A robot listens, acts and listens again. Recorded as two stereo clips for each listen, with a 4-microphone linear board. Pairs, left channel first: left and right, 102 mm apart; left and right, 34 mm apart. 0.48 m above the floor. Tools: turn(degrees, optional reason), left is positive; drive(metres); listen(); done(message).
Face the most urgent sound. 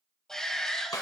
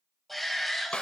turn(degrees=30)
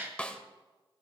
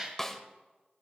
turn(degrees=-25, reason="So it is at 25° right.")
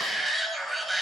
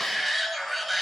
done("Found it: a shout, straight ahead, 2 to 4 m away.")